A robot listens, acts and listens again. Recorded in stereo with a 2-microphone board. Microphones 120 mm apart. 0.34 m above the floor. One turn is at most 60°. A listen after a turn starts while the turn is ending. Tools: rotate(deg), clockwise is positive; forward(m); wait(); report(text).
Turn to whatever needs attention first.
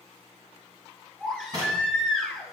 rotate(-30)
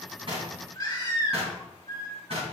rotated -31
rotate(-60)
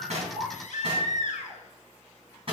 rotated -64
rotate(-60)
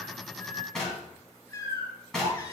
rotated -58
rotate(-30)
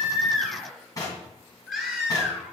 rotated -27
report("Found it: a baby crying, straight ahead.")